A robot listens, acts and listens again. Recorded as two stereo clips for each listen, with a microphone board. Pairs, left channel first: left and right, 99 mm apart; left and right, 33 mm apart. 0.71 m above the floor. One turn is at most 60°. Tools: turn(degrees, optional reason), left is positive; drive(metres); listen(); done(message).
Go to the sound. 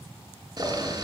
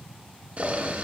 turn(degrees=-45, reason="The boiling: about 45° right or 135° right.")
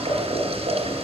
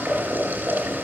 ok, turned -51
turn(degrees=-60, reason="So it is at 85° right.")
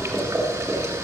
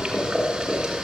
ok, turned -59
turn(degrees=-25, reason="The boiling is now 25° right.")
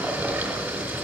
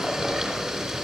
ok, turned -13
turn(degrees=-15, reason="The boiling is now 15° right.")
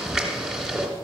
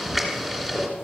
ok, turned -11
drive(metres=1.0)
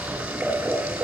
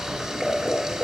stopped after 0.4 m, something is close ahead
turn(degrees=-15, reason="The boiling is now 15° right.")
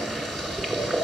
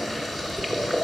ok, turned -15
done("Blocked. The boiling is further on, straight ahead.")